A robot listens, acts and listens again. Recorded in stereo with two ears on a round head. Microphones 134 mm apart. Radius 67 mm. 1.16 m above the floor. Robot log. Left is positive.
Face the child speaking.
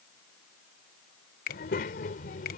note: The child speaking: about 60° left or 120° left.
cmd yaw +60
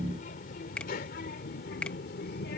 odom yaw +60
note: So it is at 70° left.
cmd yaw +70
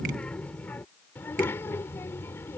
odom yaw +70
note: The child speaking is now 15° left.
cmd yaw +15
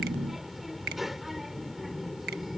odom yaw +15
end: Facing the child speaking.